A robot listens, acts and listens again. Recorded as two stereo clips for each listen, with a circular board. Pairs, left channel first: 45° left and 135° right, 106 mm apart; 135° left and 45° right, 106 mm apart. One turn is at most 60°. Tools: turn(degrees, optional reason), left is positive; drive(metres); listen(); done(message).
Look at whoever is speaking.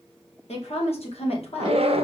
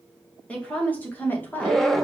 turn(degrees=60, reason="The woman speaking: 65° left.")
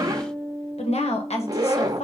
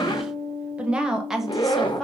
turn(degrees=50, reason="The woman speaking is now 50° left.")
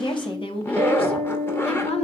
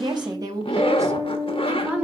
turn(degrees=30, reason="The woman speaking is now 30° left.")
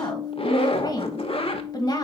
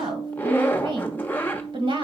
turn(degrees=-10, reason="The woman speaking is now 10° right.")
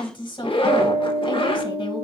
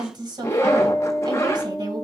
done("Found it: a woman speaking, straight ahead, 1 to 2 m away.")